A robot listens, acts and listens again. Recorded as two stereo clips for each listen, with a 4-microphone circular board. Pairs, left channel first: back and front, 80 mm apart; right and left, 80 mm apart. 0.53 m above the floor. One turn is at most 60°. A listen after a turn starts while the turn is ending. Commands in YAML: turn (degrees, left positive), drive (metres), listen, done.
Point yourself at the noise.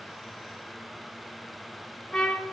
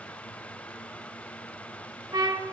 turn: 60
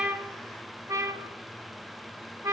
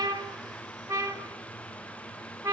turn: 40
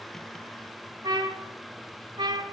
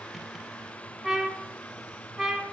done: "Found it: a trumpet, straight ahead, under 1 m away."